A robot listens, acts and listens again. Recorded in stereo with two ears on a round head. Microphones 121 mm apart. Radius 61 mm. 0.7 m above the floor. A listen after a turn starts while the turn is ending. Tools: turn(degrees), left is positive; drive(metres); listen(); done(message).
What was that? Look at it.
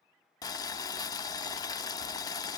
turn(degrees=25)
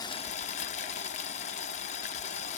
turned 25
turn(degrees=125)
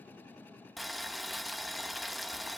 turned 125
done("Facing the boiling.")